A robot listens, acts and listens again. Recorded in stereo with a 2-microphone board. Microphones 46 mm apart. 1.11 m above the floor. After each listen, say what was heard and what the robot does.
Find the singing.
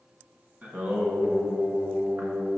The singing: about 40° right or 140° right. Turn 40° right.
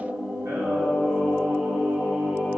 So it is at 105° right. Turn 105° right.
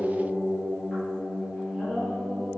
The singing is now 20° left. Turn 20° left.
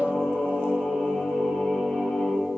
Facing the singing, 2 to 4 m away.